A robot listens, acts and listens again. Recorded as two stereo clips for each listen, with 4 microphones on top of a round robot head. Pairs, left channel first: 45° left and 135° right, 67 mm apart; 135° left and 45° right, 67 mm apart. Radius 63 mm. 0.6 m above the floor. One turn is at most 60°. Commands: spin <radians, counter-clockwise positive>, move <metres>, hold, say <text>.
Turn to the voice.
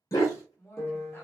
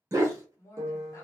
spin 1.05
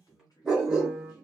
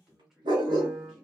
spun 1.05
spin 0.70
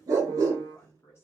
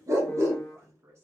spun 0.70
say Facing the woman speaking, 1 to 2 m away.